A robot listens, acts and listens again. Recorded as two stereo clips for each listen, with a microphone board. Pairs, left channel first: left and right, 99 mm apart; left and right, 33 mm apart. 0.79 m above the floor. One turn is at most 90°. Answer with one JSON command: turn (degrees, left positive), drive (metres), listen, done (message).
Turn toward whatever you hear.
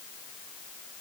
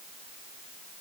{"listen": true}
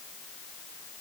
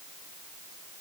{"listen": true}
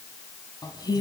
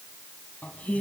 {"turn": 45}
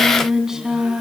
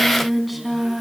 {"done": "Found it: singing, straight ahead."}